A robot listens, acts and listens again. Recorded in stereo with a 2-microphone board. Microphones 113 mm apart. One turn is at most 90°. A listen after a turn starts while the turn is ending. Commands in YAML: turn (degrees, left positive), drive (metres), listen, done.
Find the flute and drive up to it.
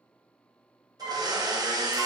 turn: 90
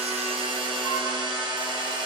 listen: true
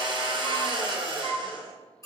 turn: -10
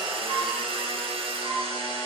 drive: 1.0
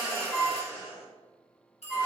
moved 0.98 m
drive: 1.0
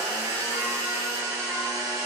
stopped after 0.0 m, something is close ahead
listen: true
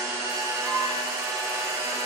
listen: true
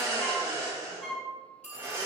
done: "I am next to the flute."